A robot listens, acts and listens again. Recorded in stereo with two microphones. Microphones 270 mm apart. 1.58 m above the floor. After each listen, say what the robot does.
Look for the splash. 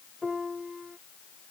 Keep listening.
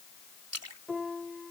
Turn 65° right.
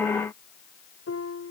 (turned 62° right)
Keep listening.
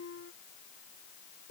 I heard a splash, but can't make it out now. It was about 5° right or 50° right.